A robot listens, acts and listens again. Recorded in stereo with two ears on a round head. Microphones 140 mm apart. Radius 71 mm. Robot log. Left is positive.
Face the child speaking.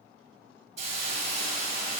cmd idle
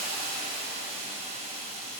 cmd idle
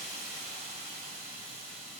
end: I can't make out a child speaking to turn to.